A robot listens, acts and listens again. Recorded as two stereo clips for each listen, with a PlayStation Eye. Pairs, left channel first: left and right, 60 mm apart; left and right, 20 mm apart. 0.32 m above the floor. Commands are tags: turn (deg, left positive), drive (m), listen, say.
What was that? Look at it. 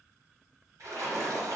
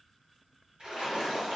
<turn deg="-50"/>
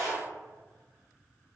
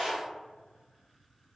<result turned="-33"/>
<turn deg="-85"/>
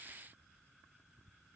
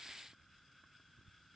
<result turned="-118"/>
<turn deg="35"/>
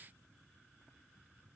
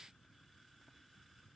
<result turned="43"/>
<turn deg="-10"/>
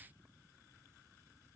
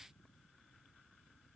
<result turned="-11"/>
<say>I heard a splash from this way, but can't make it out now.</say>